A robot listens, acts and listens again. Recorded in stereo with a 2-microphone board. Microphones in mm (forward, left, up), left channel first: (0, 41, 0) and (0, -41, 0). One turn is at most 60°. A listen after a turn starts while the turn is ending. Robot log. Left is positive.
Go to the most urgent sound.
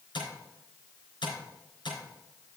cmd idle
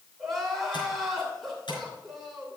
cmd yaw +30
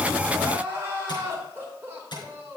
note: So it is at 30° right.
cmd yaw -30
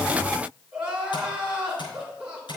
note: The crying is now 10° right.
cmd yaw -10
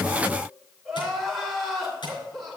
cmd fwd 1.0
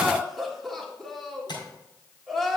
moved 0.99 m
cmd fwd 1.0
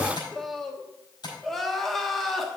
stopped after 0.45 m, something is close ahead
end: I am next to the crying.